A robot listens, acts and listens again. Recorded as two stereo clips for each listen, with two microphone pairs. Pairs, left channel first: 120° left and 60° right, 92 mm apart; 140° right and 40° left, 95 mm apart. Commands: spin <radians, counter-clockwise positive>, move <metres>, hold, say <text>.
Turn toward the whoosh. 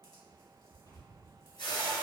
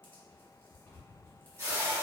spin 1.75
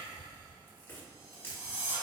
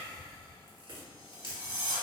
say Facing the whoosh.